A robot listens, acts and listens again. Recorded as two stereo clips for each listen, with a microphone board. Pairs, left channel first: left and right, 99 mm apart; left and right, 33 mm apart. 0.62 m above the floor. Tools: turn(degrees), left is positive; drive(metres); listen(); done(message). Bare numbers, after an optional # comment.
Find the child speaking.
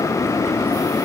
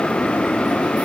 listen()
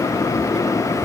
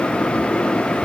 listen()
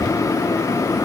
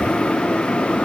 done("I can't make out a child speaking, only keys jangling.")